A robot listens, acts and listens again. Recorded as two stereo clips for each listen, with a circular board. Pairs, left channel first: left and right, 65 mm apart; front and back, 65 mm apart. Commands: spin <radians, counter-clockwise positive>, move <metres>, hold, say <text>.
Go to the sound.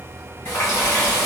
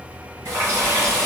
spin 2.53
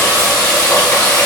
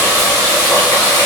spin 0.17
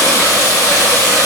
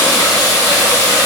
move 1.0
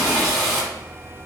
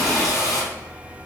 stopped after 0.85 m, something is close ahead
say Arrived at the running tap, straight ahead.